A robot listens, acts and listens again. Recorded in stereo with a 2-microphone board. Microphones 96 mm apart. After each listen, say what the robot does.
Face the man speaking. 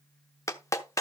Keep listening.
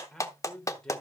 Turn 30° left.
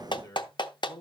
Turn 140° left.
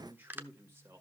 Turn 25° right.
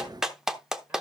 Keep listening.
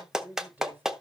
Turn 20° right.
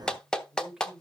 Found it: a man speaking, straight ahead.